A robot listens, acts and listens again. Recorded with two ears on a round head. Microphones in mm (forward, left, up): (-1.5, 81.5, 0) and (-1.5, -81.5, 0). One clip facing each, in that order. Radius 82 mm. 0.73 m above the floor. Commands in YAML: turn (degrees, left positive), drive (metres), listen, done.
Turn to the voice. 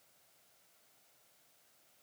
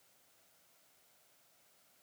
listen: true
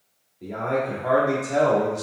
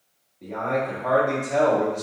turn: 30
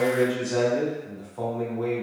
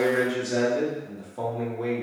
turn: -20
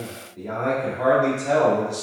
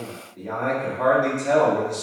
done: "Found it: a man speaking, straight ahead."